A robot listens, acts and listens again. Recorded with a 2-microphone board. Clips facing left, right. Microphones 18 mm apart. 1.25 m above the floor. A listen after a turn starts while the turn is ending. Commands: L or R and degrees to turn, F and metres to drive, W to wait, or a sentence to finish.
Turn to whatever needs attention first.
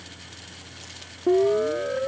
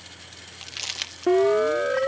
R40
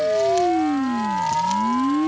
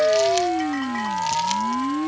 Facing the siren.